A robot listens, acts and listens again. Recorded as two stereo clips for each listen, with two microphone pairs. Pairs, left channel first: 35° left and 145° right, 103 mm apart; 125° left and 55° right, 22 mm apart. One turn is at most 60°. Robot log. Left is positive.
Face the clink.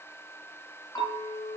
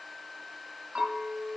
note: The clink: 25° left.
cmd yaw +25
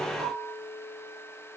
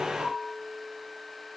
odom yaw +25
end: Found it: a clink, straight ahead, 1 to 2 m away.